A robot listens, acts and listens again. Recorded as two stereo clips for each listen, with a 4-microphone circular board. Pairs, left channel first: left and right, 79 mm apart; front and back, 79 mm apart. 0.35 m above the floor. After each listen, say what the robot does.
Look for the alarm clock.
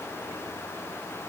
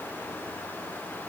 Keep listening.
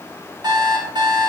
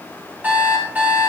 Turn 110° right.
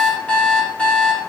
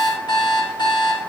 Turn 15° left.
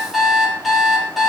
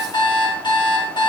Found it: an alarm clock, straight ahead, over 4 m away.